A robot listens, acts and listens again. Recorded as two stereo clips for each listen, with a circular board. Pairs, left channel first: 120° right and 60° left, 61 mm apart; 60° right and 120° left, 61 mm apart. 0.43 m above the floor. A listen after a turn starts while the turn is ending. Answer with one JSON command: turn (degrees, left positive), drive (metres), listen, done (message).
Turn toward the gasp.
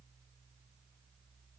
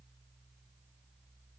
{"listen": true}
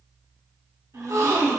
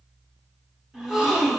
{"turn": 40}
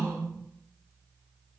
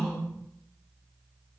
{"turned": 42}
{"done": "Facing where the gasp came from. I can't hear it now."}